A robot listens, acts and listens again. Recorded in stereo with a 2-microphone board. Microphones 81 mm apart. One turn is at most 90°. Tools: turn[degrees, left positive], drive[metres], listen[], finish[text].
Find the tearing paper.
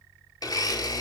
Action: listen[]
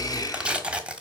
Action: turn[-30]
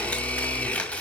Thought: So it is at 15° left.
Action: turn[15]
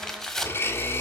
Action: finish[Facing the tearing paper, 1 to 2 m away.]